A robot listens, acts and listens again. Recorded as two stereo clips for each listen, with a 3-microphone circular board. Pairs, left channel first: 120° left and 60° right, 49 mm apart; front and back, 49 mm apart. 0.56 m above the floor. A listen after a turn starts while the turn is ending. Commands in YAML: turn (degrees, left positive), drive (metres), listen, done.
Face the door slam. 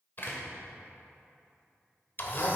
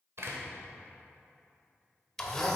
turn: 160
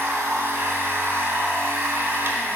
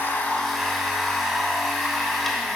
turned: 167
done: "I heard a door slam from this way, but can't make it out now."